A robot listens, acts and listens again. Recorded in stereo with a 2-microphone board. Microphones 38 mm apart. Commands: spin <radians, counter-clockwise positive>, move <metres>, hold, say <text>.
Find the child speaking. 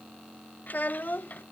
spin 0.79
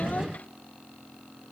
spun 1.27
hold
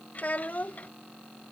spin 0.87
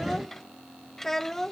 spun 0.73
spin 0.17
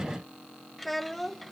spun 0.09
say Facing the child speaking.